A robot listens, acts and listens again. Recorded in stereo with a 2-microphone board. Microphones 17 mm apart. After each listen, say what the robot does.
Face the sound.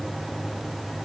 Keep listening.
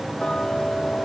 Turn 55° left.
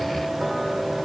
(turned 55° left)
Keep listening.
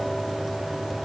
Keep listening.
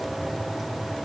I heard ticking, but can't make it out now. It was about straight ahead or 70° left.